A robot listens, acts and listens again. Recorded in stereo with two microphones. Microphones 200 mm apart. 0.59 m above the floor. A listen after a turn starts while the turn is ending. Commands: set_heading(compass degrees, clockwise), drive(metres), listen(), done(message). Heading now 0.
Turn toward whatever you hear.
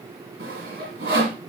set_heading(70)
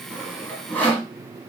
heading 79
done("Facing the sawing.")